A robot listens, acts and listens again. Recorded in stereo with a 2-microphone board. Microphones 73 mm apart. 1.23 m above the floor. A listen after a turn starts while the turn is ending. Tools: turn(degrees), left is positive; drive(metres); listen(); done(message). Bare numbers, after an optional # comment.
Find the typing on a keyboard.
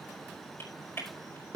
# The typing on a keyboard: about 35° left or 145° left.
turn(35)
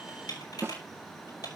# So it is at 115° left.
turn(115)
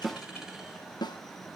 listen()
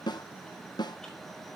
listen()
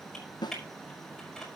done("Found it: typing on a keyboard, straight ahead, over 4 m away.")